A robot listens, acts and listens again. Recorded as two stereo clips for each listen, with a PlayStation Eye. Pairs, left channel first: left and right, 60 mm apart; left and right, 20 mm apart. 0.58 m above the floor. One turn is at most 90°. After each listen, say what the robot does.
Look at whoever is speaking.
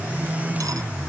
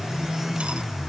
Keep listening.
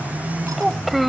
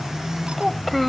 Turn 30° left.
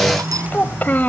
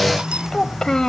Turn 90° left.
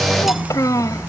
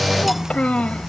Turn 80° left.
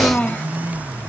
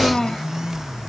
Turn 20° left.
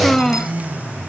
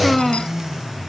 Found it: a child speaking, straight ahead.